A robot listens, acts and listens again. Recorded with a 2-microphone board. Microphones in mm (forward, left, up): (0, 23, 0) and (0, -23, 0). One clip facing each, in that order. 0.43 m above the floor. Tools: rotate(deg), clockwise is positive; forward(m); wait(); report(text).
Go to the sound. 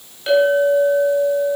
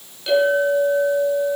rotate(-15)
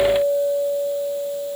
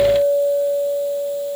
rotate(-150)
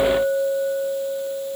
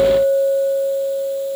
rotate(-40)
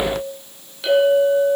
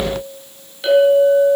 forward(1.0)
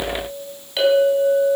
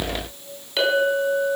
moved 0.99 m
forward(1.0)
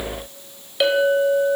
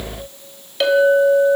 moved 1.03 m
rotate(-10)
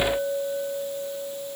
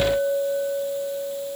forward(1.0)
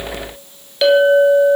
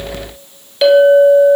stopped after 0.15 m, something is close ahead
report("I am next to the clink.")